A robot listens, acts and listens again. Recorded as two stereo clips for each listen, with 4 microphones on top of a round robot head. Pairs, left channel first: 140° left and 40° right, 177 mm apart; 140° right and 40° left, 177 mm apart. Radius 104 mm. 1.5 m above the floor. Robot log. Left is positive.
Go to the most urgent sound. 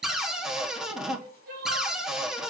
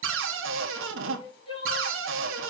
note: The crying: 80° right.
cmd yaw -80
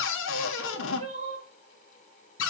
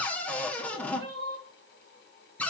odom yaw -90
note: The crying is now 10° left.
cmd yaw +10
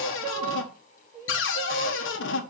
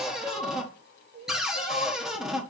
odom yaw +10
cmd fwd 1.0
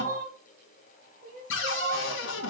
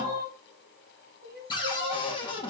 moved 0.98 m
cmd fwd 1.0
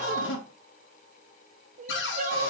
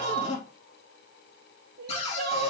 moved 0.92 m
note: The crying is now 10° left.
cmd yaw +10
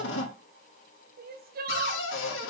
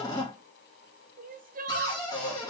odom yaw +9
cmd fwd 1.0
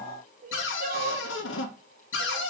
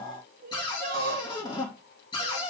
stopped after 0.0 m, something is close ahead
end: I am next to the crying.